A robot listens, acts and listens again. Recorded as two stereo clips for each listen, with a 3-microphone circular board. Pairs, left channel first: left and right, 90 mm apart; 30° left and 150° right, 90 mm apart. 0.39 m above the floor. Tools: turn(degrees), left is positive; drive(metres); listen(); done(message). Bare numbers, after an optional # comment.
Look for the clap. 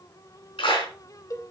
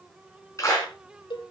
# The clap: 80° left.
turn(80)
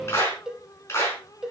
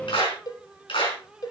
# The clap is now 30° left.
turn(30)
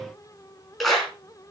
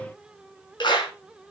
done("Found it: a clap, straight ahead, over 4 m away.")